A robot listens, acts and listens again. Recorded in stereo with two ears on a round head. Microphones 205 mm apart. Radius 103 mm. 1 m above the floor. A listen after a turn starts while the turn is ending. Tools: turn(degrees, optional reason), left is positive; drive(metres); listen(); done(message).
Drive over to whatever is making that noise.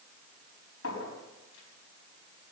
turn(degrees=65, reason="The clink: about 65° left or 115° left.")
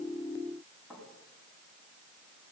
drive(metres=1.0)
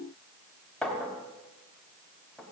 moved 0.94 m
drive(metres=1.0)
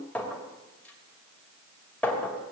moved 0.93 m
turn(degrees=10, reason="The clink is now 10° left.")
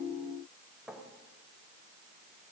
drive(metres=1.0)
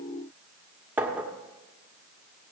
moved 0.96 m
turn(degrees=-10, reason="The clink is now 10° right.")
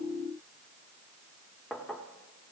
drive(metres=1.0)
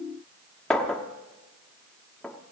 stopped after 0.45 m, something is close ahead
done("I am next to the clink.")